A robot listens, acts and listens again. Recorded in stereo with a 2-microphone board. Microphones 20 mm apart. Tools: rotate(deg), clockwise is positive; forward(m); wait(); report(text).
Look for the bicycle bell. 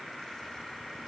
wait()
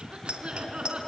rotate(70)
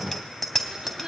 report("Found it: a bicycle bell, straight ahead.")